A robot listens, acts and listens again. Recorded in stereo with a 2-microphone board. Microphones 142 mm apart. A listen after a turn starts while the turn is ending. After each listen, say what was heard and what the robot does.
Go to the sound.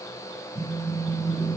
Turn 30° left.
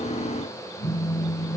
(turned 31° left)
So it is at 135° left. Turn 135° left.
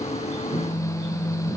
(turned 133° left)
Drive 1.0 m forward.
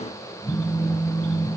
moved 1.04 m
Drive 1.0 m forward.
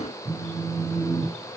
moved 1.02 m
Drive 1.0 m forward.
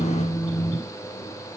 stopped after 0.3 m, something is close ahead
The phone buzzing is now 10° left. Turn 10° left.
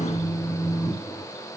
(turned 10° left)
Arrived at the phone buzzing, straight ahead.